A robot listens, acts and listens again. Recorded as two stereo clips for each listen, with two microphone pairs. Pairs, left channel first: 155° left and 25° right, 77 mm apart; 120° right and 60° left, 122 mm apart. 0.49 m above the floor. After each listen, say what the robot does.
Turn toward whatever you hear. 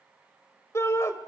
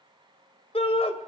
Turn 155° right.
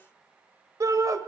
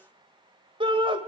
Turn 15° left.
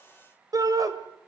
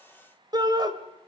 Turn 10° left.
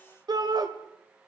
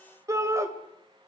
Facing the shout.